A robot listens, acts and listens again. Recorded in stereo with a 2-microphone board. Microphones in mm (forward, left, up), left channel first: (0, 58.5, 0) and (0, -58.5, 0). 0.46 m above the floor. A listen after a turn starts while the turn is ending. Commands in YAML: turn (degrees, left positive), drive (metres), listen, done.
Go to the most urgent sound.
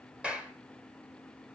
listen: true
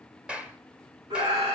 turn: -40
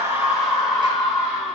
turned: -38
drive: 1.0
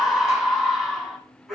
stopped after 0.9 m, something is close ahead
done: "Something is in my way. I am facing the scream but have not reached it."